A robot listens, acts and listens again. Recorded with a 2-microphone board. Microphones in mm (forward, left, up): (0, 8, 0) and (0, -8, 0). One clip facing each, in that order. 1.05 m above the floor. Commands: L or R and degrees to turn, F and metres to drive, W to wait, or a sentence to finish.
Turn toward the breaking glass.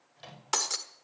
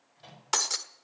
R30
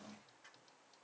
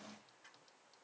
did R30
W
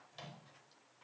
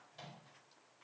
I heard breaking glass, but can't make it out now. It was about 25° left or 145° right.